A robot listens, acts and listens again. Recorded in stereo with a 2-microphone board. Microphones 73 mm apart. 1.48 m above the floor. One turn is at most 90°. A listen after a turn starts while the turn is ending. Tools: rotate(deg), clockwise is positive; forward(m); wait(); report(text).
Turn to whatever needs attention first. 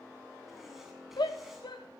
rotate(-90)
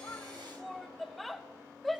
report("Found it: a shout, straight ahead, 2 to 4 m away.")